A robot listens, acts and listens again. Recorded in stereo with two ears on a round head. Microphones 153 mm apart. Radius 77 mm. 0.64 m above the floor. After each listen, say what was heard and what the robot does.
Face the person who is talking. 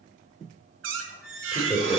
Turn 30° right.
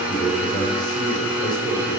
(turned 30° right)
So it is at 25° left. Turn 25° left.
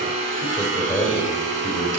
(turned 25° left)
Facing the man speaking, 2 to 4 m away.